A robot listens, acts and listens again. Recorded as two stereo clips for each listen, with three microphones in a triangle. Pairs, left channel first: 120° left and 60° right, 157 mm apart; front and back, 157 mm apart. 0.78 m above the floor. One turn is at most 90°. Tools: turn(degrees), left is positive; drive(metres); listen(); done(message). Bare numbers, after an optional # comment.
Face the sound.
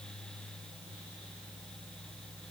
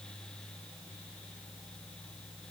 listen()
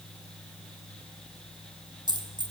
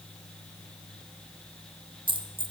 # The dropped coin: 120° right.
turn(-90)
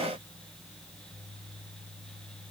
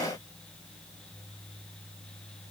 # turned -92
# Nothing new. It was at 30° right.
turn(-30)
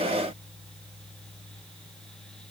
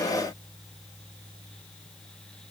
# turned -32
done("Facing where the dropped coin came from. I can't hear it now.")